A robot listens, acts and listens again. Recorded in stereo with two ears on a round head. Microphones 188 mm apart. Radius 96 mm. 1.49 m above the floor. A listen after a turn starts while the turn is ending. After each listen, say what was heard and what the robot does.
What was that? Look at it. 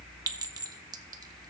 The clink: about 20° right or 160° right. Turn 20° right.
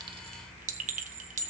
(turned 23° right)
So it is at 135° right. Turn 135° right.
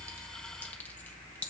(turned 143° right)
The clink is now 10° left. Turn 10° left.
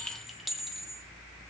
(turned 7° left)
Found it: a clink, straight ahead.